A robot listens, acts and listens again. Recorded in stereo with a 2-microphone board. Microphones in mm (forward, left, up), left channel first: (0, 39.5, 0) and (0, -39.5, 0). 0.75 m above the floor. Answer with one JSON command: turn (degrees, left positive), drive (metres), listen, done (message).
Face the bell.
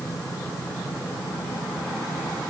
{"listen": true}
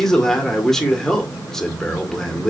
{"listen": true}
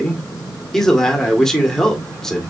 {"done": "I can't make out a bell, only a man speaking."}